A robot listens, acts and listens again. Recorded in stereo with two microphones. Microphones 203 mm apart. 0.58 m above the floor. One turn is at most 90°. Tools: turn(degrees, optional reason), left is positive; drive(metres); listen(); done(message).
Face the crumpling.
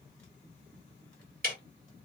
listen()
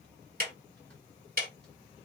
listen()
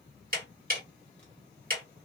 done("I can't make out crumpling, only ticking.")